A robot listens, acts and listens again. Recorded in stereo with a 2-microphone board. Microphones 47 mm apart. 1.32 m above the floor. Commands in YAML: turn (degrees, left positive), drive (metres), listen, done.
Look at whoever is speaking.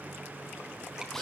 listen: true
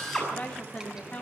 turn: 40
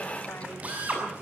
listen: true
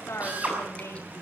turn: 100
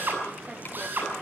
listen: true
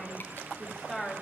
done: "Facing the woman speaking, over 4 m away."